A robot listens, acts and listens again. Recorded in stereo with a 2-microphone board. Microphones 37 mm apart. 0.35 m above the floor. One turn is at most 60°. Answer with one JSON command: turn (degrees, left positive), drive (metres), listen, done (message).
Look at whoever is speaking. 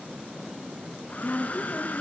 {"turn": 45}
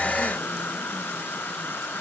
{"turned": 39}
{"listen": true}
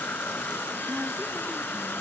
{"listen": true}
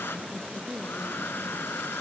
{"done": "Facing the woman speaking."}